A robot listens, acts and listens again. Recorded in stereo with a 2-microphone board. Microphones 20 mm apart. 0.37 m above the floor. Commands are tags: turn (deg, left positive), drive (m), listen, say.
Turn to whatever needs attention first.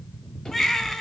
<turn deg="15"/>
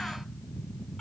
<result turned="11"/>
<listen/>
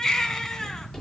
<turn deg="155"/>
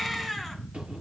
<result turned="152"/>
<say>Found it: a baby crying, straight ahead, 2 to 4 m away.</say>